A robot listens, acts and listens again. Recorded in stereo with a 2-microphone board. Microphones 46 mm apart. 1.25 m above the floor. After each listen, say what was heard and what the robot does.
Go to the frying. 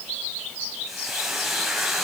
Turn 30° right.
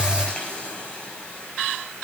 So it is at 25° left. Turn 25° left.
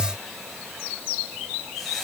Keep listening.
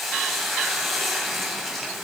Drive 1.0 m forward.
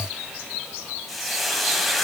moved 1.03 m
Drive 1.0 m forward.
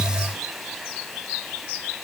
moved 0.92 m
Drive 1.0 m forward.
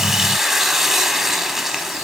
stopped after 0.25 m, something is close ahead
The frying is now 10° right. Turn 10° right.
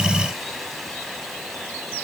Keep listening.
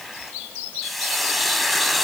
I am next to the frying.